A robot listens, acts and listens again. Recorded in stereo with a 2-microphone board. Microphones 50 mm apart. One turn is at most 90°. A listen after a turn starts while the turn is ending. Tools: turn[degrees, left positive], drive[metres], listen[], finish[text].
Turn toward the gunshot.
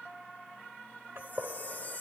Thought: The gunshot: about 55° right or 125° right.
Action: turn[-55]
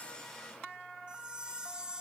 Action: listen[]
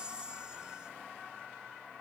Action: finish[I heard a gunshot, but can't make it out now. It was about straight ahead or 70° right.]